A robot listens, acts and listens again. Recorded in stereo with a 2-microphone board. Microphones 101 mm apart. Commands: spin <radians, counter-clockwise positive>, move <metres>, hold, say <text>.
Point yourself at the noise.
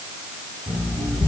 spin 0.35
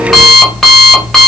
say Found it: an alarm clock, straight ahead.